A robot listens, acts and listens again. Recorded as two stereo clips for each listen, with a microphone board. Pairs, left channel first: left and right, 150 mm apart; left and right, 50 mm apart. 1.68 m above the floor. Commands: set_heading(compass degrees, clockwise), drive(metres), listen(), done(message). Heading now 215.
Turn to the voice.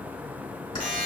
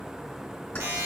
listen()
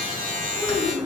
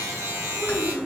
set_heading(245)
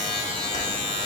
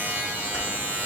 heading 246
listen()
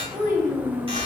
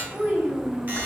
set_heading(1)
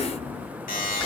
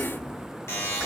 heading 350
set_heading(5)
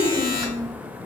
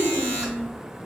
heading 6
done("Facing the child speaking, 1 to 2 m away.")